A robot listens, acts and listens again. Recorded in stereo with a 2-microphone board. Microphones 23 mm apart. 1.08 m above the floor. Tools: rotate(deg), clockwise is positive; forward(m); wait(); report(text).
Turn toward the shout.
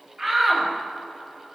rotate(30)
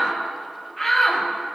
report("Found it: a shout, straight ahead.")